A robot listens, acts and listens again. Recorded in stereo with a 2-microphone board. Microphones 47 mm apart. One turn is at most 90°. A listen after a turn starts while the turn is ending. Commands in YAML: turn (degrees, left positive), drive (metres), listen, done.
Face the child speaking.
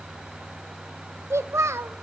turn: -70
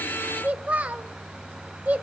turn: -30
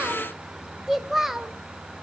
turn: -10
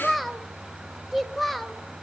done: "Facing the child speaking."